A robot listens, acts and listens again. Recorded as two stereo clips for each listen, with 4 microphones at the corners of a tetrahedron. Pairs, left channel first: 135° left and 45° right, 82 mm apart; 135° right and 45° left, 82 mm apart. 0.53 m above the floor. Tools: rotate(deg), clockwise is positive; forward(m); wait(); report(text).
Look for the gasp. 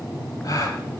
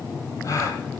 rotate(-180)
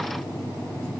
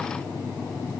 report("Facing where the gasp came from. I can't hear it now.")